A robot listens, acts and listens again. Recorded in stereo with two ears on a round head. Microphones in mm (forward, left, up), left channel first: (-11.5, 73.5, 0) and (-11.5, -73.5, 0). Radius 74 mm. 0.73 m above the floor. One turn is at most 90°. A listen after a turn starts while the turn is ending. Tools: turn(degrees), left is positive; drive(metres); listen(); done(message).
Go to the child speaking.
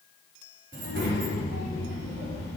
turn(degrees=-90)
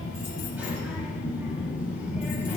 turn(degrees=-10)
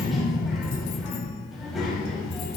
drive(metres=1.0)
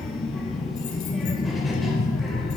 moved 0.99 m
drive(metres=1.0)
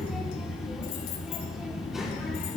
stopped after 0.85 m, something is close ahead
done("I am next to the child speaking.")